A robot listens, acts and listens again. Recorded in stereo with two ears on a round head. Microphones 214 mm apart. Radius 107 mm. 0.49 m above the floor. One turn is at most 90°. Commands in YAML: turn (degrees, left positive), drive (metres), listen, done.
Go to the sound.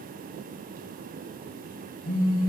turn: 50
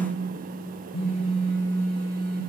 turn: 75
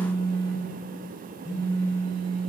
turn: 15
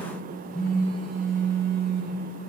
drive: 1.0
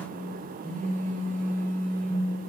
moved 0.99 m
turn: 10
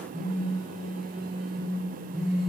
drive: 1.0
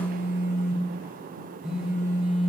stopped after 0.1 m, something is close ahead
done: "Arrived at the phone buzzing, straight ahead."